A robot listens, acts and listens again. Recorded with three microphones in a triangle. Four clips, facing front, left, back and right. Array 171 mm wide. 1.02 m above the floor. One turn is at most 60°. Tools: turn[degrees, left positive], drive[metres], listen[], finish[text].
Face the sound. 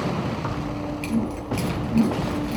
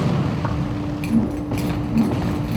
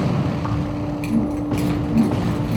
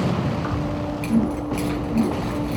Thought: The keys jangling: 80° left.
Action: turn[60]
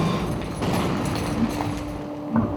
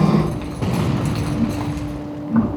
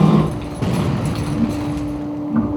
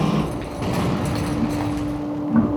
Action: finish[Found it: keys jangling, straight ahead.]